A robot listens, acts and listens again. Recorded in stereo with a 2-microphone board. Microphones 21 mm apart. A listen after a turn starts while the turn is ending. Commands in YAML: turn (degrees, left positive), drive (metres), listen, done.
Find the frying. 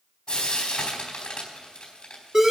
turn: 55
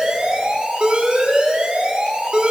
listen: true
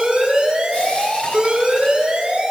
listen: true
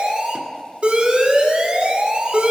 done: "I heard frying, but can't make it out now. It was about straight ahead or 70° left."